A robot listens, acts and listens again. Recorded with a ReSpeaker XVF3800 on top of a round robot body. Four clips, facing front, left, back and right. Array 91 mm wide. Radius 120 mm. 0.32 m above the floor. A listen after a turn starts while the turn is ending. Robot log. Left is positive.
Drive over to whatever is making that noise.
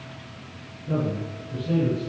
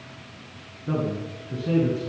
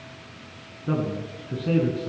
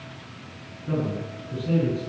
note: The man speaking: 155° left.
cmd yaw +155
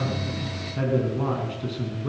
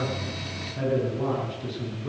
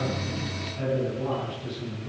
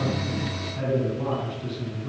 cmd fwd 1.0
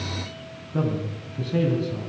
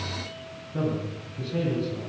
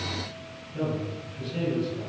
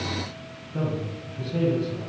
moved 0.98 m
cmd fwd 1.0
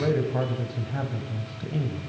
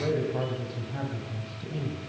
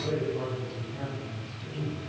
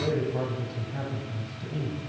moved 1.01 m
cmd fwd 1.0
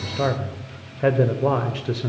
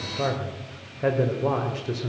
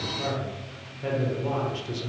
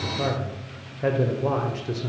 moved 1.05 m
cmd fwd 1.0
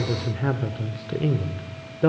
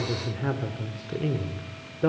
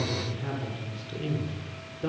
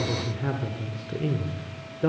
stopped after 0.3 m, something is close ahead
end: I am next to the man speaking.